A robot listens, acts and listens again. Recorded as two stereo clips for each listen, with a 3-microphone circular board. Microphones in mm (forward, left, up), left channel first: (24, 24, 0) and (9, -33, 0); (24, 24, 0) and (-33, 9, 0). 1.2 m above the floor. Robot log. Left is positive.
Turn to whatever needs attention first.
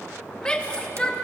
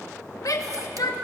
end: Facing the shout, 1 to 2 m away.